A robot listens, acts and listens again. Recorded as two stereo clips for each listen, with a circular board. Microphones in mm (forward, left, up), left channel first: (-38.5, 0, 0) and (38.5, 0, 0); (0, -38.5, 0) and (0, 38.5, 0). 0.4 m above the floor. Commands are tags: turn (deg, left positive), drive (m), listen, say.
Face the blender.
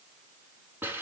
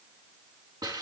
<listen/>
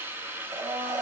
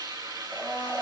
<turn deg="20"/>
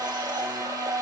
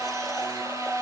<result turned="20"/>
<say>Found it: a blender, straight ahead, 2 to 4 m away.</say>